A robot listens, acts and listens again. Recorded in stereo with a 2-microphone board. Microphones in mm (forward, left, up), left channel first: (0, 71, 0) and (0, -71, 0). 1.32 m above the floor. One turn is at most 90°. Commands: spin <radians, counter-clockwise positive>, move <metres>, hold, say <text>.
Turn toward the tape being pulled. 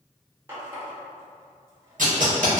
spin -1.22
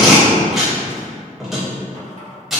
say Found it: tape being pulled, straight ahead.